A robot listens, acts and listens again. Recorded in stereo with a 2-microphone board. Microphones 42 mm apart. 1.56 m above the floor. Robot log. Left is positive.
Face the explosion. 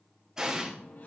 note: The explosion: about 15° right or 165° right.
cmd yaw -15
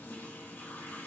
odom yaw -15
cmd idle
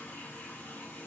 end: I heard an explosion, but can't make it out now. It was about straight ahead or 150° right.